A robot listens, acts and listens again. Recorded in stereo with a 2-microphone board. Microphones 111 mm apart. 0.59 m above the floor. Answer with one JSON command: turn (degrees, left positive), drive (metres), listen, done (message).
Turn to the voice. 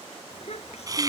{"turn": 65}
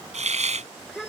{"done": "Found it: a child speaking, straight ahead."}